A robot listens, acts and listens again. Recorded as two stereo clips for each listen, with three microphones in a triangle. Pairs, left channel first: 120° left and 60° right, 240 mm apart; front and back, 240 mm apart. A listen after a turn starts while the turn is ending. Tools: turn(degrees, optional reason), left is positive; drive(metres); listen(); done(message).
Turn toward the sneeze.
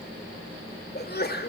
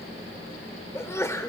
turn(degrees=80, reason="The sneeze: 80° left.")
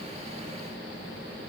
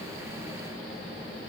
done("Facing where the sneeze came from. I can't hear it now.")